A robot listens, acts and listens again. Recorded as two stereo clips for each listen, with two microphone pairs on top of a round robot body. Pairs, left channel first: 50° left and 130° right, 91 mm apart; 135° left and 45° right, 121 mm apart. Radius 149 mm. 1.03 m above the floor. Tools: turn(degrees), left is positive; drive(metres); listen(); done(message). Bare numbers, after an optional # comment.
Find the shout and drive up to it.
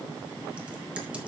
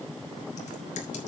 listen()
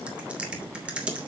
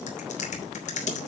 listen()
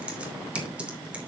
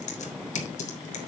done("I can't make out a shout, only typing on a keyboard.")